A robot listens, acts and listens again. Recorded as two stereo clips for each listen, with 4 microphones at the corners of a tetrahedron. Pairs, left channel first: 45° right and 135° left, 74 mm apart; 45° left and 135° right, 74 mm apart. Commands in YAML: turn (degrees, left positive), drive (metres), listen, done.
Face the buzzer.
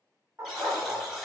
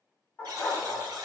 turn: -145
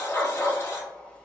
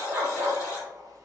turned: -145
listen: true
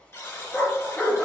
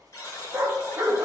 done: "Facing the buzzer, 1 to 2 m away."